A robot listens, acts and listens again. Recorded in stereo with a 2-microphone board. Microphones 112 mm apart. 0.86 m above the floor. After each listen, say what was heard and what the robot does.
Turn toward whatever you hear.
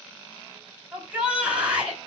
Turn 30° right.
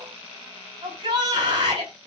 So it is at 140° right. Turn 140° right.
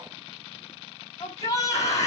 The shout is now 30° left. Turn 30° left.
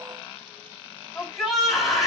Facing the shout, over 4 m away.